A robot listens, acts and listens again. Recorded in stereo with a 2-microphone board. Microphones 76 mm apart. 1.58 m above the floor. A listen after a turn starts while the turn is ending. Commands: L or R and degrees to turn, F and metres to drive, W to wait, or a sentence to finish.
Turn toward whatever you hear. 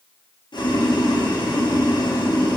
L90
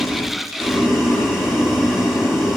Found it: boiling, straight ahead, 1 to 2 m away.